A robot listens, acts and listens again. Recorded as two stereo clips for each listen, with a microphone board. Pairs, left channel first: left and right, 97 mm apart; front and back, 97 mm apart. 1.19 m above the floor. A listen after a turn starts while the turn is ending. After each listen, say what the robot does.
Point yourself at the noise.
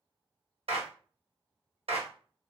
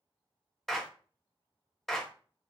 Turn 85° right.
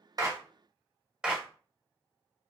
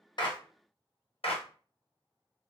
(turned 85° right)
Turn 10° right.
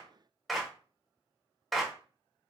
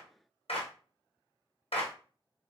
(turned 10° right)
Facing the clap.